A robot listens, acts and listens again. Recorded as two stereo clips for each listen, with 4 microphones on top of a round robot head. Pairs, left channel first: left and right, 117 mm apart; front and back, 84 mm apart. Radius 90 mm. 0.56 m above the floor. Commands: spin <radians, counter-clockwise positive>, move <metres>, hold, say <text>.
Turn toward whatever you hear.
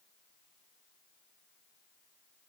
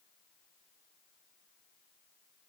hold
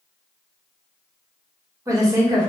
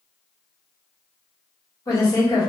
spin -0.70
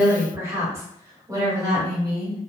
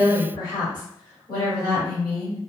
spin -0.70
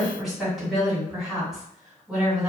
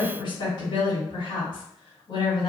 say Found it: a woman speaking, straight ahead, 2 to 4 m away.